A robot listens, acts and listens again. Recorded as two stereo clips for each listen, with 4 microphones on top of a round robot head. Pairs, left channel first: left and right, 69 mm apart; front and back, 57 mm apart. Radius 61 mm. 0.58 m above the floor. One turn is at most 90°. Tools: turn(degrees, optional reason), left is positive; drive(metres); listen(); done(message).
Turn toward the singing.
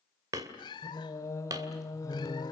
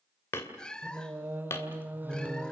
turn(degrees=90, reason="The singing: 120° left.")
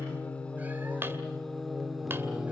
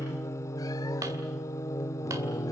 done("Facing the singing, 1 to 2 m away.")